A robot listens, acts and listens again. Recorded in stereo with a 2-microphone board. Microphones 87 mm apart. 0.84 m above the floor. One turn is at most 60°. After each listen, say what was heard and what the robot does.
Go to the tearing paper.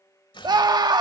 The tearing paper: about 70° left or 110° left. Turn 60° left.
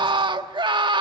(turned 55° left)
Keep listening.
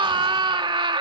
Keep listening.
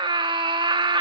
I heard tearing paper, but can't make it out now. It was about 15° left or 55° left. I did not reach it.